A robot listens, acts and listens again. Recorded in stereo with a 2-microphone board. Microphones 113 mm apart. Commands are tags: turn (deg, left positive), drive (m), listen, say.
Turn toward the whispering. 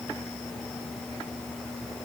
<listen/>
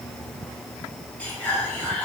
<turn deg="30"/>
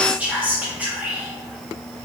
<turn deg="-15"/>
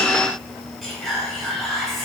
<say>Found it: whispering, straight ahead.</say>